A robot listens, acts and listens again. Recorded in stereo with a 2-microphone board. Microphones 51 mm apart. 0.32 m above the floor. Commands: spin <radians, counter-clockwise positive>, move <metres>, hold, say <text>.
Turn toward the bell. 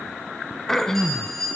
spin 0.52
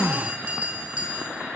spin -0.44
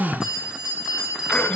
spin -0.26
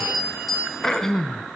say Found it: a bell, straight ahead, over 4 m away.